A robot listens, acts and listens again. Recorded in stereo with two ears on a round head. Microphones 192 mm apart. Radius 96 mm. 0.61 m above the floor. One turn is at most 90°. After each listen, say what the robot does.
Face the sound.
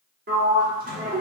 Turn 40° right.
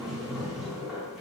Found it: a sliding door, straight ahead.